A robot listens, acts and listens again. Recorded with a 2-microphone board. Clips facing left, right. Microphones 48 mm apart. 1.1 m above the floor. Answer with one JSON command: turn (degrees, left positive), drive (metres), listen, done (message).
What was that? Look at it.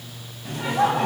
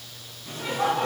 {"turn": 70}
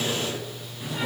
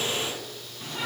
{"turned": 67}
{"done": "Found it: laughter, straight ahead."}